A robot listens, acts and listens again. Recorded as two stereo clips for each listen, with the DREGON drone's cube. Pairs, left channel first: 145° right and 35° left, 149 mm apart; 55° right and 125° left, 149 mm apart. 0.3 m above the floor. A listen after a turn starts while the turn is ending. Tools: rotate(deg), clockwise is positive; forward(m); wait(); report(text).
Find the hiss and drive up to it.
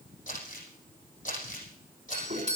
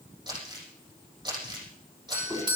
wait()
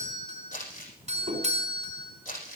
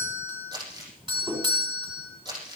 wait()
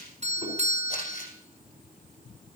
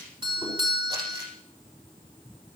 report("I can't make out a hiss, only crumpling and a doorbell.")